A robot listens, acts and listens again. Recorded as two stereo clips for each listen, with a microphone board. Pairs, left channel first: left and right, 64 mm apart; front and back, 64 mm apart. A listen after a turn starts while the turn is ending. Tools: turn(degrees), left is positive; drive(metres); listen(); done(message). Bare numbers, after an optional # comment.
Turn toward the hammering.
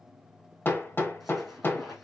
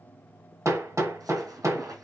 # The hammering: 145° left.
turn(145)
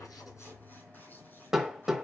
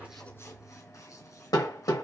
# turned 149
# The hammering is now 10° right.
turn(-10)
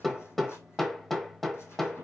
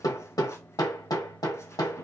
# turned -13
done("Found it: hammering, straight ahead, 1 to 2 m away.")